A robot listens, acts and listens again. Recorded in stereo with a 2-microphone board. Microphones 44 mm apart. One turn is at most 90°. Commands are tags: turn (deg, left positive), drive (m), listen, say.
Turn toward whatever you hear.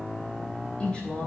<turn deg="25"/>
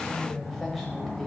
<say>Found it: a woman speaking, straight ahead, 2 to 4 m away.</say>